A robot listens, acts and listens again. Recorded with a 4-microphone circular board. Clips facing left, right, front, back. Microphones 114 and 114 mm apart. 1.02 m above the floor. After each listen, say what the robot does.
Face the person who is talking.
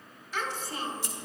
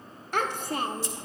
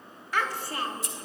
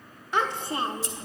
Turn 115° right.
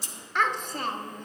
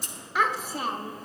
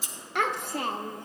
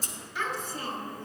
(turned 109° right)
Found it: a child speaking, straight ahead.